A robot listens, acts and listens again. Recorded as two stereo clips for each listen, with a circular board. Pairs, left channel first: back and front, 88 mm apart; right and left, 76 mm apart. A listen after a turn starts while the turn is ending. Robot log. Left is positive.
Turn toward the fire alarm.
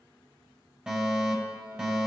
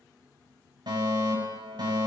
note: The fire alarm: 80° left.
cmd yaw +80
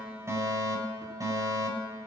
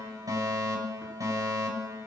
note: The fire alarm is now 45° left.
cmd yaw +45
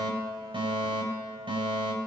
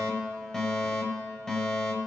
note: The fire alarm is now 10° right.
cmd yaw -10
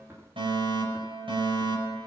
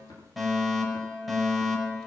end: Facing the fire alarm, over 4 m away.